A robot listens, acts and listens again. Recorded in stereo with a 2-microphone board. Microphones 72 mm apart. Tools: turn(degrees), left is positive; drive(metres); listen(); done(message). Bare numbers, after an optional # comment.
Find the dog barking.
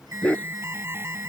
# The dog barking: about 20° left or 160° left.
turn(20)
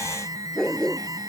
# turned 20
turn(30)
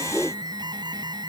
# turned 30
# So it is at 20° right.
turn(-20)
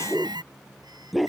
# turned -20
done("Found it: a dog barking, straight ahead.")